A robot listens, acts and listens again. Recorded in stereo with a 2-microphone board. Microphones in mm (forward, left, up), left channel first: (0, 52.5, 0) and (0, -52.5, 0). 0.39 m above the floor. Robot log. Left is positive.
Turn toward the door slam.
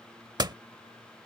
note: The door slam: about 40° right or 140° right.
cmd yaw -40
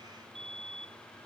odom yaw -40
cmd idle
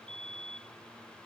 end: I heard a door slam, but can't make it out now. It was about straight ahead or 100° right.